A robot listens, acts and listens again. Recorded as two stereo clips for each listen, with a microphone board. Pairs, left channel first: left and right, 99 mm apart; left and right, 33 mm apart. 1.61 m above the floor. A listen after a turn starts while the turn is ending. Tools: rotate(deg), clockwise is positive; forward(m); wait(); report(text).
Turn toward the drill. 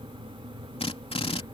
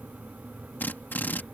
rotate(-90)
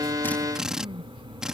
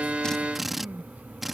report("Facing the drill.")